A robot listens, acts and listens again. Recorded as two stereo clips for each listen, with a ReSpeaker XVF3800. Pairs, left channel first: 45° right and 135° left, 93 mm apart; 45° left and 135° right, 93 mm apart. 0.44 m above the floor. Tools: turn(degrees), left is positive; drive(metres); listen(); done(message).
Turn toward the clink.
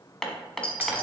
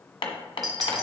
turn(degrees=-45)
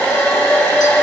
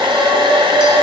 listen()
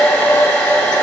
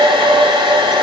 listen()
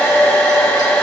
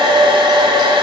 done("Facing where the clink came from. I can't hear it now.")